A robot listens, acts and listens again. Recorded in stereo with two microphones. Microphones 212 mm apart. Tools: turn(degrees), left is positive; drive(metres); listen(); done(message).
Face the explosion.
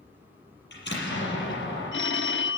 turn(degrees=55)
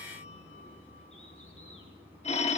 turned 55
listen()
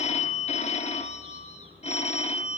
done("I heard an explosion, but can't make it out now. It was about straight ahead or 70° left.")